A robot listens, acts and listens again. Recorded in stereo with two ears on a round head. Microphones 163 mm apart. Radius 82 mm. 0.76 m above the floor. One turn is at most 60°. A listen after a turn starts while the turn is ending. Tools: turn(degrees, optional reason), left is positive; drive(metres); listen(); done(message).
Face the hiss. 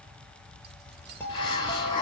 turn(degrees=25, reason="The hiss: about 25° left or 155° left.")
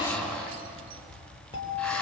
done("Found it: a hiss, straight ahead, 2 to 4 m away.")